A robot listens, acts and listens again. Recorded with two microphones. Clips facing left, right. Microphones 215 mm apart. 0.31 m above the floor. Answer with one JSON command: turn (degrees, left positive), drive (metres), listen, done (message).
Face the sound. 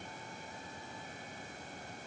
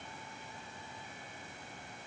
{"listen": true}
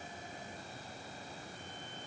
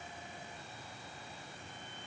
{"listen": true}
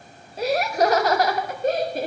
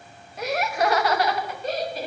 {"turn": 55}
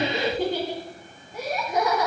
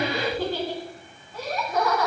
{"turn": 20}
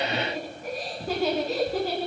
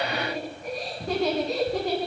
{"done": "Facing the laughter."}